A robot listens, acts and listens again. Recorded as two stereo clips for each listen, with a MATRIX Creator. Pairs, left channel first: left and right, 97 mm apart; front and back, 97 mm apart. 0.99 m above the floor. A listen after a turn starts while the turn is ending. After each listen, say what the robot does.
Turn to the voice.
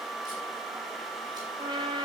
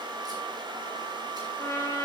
Keep listening.
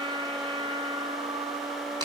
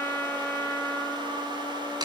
Keep listening.
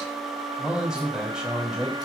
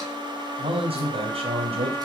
Turn 175° right.
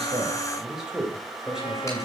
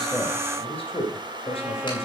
Facing the man speaking.